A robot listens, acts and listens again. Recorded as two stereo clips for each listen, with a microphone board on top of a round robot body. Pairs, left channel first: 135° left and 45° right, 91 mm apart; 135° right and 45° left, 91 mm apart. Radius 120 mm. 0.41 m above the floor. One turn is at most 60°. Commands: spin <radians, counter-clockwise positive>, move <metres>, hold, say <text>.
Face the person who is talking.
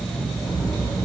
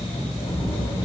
spin -1.05
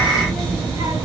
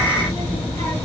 spin -1.05
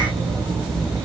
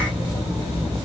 spin -0.70
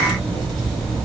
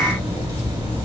spin -0.17
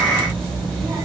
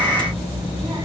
say Facing the child speaking, 2 to 4 m away.